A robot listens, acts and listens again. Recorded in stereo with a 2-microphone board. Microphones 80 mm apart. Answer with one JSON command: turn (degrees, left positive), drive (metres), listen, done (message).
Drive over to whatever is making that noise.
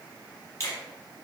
{"turn": 35}
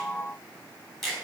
{"drive": 1.0}
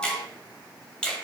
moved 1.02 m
{"turn": 10}
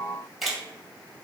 {"drive": 1.0}
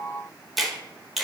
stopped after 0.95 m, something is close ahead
{"done": "I am next to the finger snap."}